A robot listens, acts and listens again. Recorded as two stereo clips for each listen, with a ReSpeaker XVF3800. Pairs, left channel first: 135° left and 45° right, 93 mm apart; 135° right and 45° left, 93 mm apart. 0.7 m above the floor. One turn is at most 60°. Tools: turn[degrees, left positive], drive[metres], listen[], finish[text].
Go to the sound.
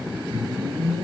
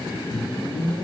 Thought: The whoosh: 85° right.
Action: turn[-60]
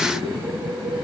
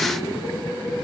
Thought: The whoosh is now 40° right.
Action: turn[-40]
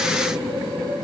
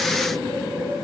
Thought: The whoosh is now 20° right.
Action: turn[-20]
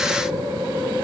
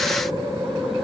Action: drive[1.0]
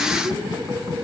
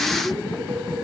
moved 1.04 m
Thought: The whoosh is now 10° left.
Action: turn[10]
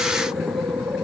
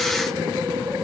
Action: drive[1.0]
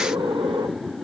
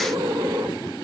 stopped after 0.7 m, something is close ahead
Action: finish[I am next to the whoosh.]